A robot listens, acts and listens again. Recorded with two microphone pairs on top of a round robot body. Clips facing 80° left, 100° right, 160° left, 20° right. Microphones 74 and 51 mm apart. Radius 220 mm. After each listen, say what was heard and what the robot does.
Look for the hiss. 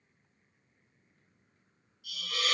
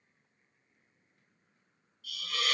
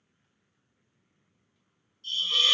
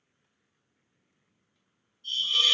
The hiss: 160° left. Turn 160° left.
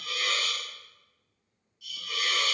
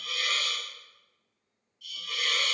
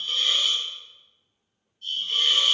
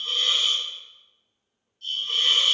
The hiss is now 10° right. Turn 10° right.
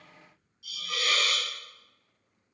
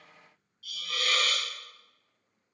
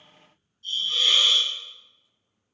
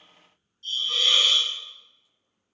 Facing the hiss, under 1 m away.